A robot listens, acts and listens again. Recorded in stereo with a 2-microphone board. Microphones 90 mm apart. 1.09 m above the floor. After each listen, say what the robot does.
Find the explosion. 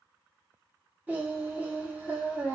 Keep listening.
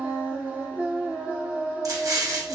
Turn 40° right.
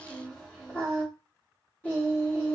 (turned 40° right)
Keep listening.
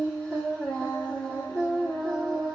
I heard an explosion, but can't make it out now. It was about straight ahead or 100° right.